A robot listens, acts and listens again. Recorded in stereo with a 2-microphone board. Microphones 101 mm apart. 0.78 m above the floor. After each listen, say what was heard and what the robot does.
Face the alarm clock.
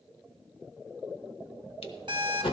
The alarm clock: about 50° right or 130° right. Turn 50° right.
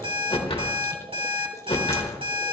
So it is at 80° right. Turn 80° right.
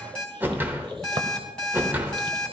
The alarm clock is now 10° left. Turn 10° left.
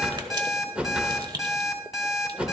Facing the alarm clock, 2 to 4 m away.